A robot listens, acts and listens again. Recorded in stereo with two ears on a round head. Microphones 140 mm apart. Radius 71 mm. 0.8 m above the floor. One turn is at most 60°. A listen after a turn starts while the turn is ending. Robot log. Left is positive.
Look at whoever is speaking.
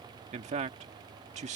note: The man speaking: about 45° right or 135° right.
cmd yaw -45
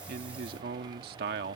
note: So it is at 85° right.
cmd yaw -60
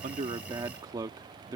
note: The man speaking is now 25° right.
cmd yaw -25
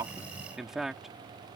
end: Found it: a man speaking, straight ahead.